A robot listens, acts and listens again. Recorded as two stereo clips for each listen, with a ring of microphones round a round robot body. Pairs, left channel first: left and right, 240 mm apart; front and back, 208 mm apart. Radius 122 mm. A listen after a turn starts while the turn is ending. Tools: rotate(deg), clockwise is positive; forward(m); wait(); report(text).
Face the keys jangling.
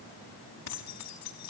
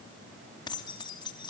rotate(-70)
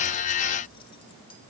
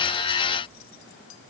wait()
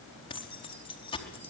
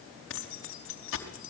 rotate(-20)
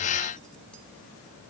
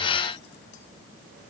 wait()
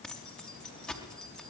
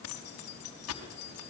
report("Found it: keys jangling, straight ahead.")